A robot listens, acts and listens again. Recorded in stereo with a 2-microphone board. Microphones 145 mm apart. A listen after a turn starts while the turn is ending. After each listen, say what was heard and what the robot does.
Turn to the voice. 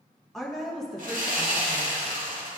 Turn 30° left.
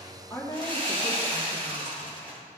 So it is at 150° left. Turn 150° left.
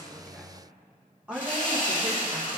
The woman speaking is now 10° right. Turn 10° right.
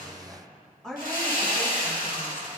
Found it: a woman speaking, straight ahead, 1 to 2 m away.